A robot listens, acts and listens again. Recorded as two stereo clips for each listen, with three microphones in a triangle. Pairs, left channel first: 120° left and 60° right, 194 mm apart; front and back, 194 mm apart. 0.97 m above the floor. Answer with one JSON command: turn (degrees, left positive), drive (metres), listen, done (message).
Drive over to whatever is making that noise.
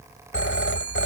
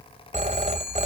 {"turn": 125}
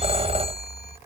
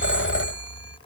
{"drive": 1.0}
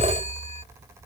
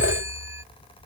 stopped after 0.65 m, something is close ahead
{"turn": -10}
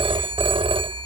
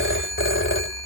{"done": "Blocked. The phone ringing is further on, straight ahead."}